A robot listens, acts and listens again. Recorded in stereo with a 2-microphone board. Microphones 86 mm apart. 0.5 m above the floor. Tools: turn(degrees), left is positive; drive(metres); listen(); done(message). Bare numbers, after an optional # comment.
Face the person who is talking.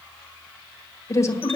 # The woman speaking: about 35° left or 145° left.
turn(35)
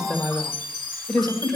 done("Found it: a woman speaking, straight ahead, 1 to 2 m away.")